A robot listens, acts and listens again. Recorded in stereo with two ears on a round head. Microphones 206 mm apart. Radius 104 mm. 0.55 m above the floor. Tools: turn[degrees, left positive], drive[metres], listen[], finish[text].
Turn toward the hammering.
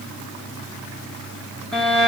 Action: listen[]
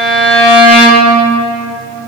Action: listen[]
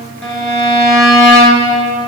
Action: finish[I can't make out hammering, only a violin.]